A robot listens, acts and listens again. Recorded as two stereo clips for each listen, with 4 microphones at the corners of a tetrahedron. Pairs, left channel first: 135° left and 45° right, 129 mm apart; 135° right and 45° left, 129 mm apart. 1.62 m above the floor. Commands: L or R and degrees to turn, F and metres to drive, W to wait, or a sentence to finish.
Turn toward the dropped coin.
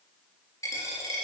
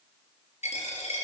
R160
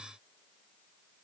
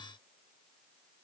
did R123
R35
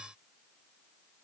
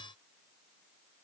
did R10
R25
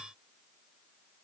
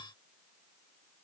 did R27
I heard a dropped coin from this way, but can't make it out now.